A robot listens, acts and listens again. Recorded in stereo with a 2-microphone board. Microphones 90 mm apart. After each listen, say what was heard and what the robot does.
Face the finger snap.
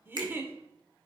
The finger snap: about 60° right or 120° right. Turn 60° right.
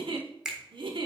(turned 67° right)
So it is at 10° right. Turn 10° right.
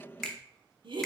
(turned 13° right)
Found it: a finger snap, straight ahead, 1 to 2 m away.